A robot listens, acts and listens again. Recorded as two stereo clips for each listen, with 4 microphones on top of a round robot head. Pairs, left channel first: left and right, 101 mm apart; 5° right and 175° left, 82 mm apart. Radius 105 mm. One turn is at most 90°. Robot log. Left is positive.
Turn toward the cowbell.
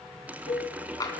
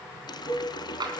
note: The cowbell: 60° left.
cmd yaw +60
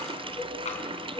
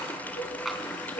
end: Found it: a cowbell, straight ahead, 2 to 4 m away.